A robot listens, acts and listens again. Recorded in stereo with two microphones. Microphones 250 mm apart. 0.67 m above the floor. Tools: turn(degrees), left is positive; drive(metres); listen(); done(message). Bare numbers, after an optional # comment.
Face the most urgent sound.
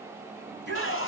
# The shout: about 45° right or 135° right.
turn(-45)
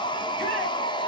listen()
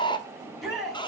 done("Found it: a shout, straight ahead, over 4 m away.")